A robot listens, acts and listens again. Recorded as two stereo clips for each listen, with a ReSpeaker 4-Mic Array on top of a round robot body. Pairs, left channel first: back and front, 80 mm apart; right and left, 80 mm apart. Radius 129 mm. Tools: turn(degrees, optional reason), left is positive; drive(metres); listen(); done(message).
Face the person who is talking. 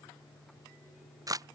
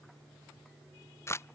listen()
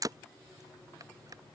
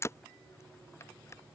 listen()
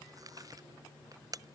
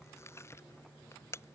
done("I can't make out anyone speaking, only a camera shutter.")